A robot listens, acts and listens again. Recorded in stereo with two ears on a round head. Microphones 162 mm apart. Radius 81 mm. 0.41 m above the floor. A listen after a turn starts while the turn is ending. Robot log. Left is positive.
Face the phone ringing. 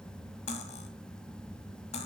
cmd idle
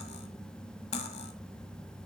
cmd idle
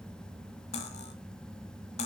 end: I can't make out a phone ringing, only cutlery clinking.